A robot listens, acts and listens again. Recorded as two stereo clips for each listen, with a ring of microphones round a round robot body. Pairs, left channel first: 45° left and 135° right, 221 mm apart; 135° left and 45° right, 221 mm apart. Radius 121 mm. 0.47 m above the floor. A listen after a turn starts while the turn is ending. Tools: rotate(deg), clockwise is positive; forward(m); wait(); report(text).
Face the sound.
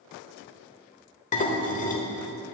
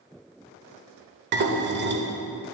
rotate(10)
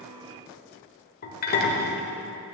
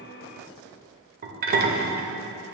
report("Found it: dishes clattering, straight ahead.")